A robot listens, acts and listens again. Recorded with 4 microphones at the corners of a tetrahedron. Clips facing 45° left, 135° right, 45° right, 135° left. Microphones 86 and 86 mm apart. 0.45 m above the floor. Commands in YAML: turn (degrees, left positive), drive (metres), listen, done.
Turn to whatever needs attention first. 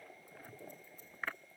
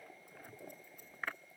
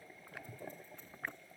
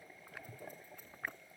listen: true
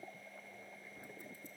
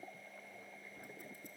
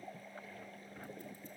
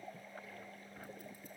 listen: true
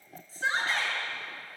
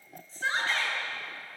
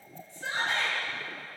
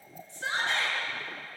turn: 130
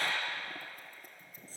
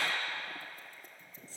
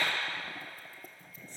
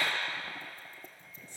done: "Found it: a shout, straight ahead, over 4 m away."